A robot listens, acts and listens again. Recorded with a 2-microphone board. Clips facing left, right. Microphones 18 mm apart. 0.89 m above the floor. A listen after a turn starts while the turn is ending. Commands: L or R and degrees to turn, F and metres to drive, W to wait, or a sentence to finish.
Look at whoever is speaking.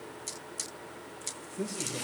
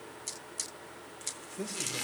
R35
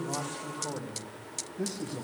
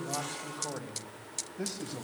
R105
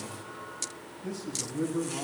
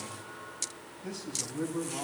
R20
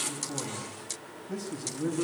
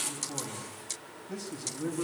Found it: a man speaking, straight ahead.